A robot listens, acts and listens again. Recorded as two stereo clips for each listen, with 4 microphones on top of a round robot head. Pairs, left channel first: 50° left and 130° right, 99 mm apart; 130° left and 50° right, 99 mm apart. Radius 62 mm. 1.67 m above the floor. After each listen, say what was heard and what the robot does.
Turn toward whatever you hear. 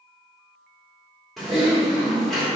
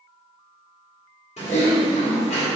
The typing on a keyboard: 140° left. Turn 140° left.
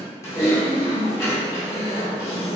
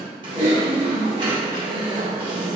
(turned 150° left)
The typing on a keyboard is now 10° right. Turn 10° right.
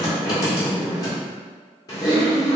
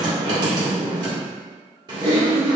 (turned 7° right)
Found it: typing on a keyboard, straight ahead.